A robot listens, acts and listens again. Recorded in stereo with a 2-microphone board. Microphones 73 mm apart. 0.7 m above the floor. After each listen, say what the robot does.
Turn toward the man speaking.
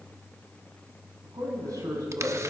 Turn 55° right.
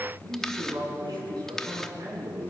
Turn 70° right.
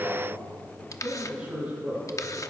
Turn 20° right.
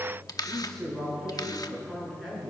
Facing the man speaking.